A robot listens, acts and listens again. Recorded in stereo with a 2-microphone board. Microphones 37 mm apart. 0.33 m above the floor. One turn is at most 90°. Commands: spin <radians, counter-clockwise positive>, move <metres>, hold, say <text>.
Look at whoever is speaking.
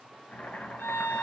hold
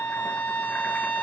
hold
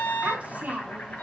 spin -0.70
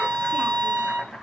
hold
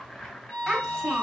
say Found it: a child speaking, straight ahead.